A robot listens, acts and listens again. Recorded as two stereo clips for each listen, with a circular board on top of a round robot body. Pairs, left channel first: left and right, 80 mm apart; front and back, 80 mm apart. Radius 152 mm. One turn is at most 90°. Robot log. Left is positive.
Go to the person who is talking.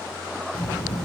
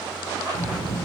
note: The child speaking: 20° left.
cmd yaw +20
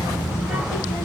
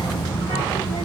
cmd fwd 1.0
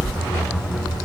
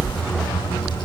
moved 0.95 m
cmd fwd 1.0
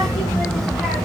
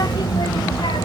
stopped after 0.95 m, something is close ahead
end: I am next to the child speaking.